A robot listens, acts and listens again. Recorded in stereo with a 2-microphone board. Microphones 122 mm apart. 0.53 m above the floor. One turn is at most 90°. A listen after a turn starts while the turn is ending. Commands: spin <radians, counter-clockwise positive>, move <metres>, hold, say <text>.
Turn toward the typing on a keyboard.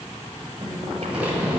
spin -0.52
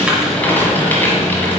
spin 0.26
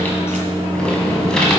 say Found it: typing on a keyboard, straight ahead, 1 to 2 m away.